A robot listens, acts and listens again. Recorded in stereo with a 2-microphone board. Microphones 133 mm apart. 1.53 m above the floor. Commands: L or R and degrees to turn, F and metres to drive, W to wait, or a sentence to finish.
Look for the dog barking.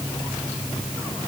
W
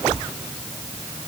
W
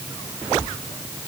I can't make out a dog barking.